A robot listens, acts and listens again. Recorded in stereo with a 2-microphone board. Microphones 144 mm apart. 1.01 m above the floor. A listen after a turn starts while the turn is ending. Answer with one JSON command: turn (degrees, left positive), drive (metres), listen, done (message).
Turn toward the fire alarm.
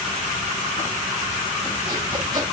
{"listen": true}
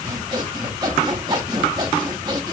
{"listen": true}
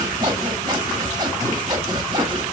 {"done": "I can't make out a fire alarm to turn to."}